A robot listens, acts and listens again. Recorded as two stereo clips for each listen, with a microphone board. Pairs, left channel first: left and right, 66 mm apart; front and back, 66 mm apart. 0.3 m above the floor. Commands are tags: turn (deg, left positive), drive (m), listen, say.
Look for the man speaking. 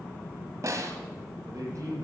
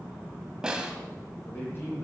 <turn deg="-55"/>
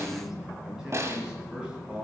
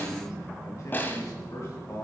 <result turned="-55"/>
<turn deg="-20"/>
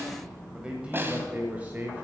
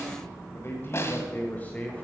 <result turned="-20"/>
<turn deg="-55"/>
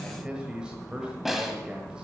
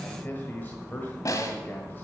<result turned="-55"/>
<turn deg="-25"/>
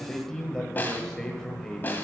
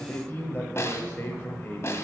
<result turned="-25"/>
<turn deg="15"/>
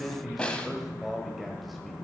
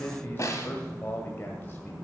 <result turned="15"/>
<say>Facing the man speaking, 1 to 2 m away.</say>